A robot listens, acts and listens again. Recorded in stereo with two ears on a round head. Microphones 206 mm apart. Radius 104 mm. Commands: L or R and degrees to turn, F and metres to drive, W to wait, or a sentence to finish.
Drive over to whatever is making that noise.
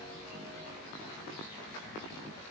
W
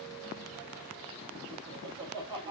R20
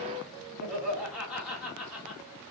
F1.0
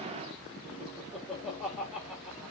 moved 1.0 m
F1.0
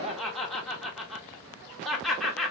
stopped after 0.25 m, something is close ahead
Arrived at the laughter, straight ahead.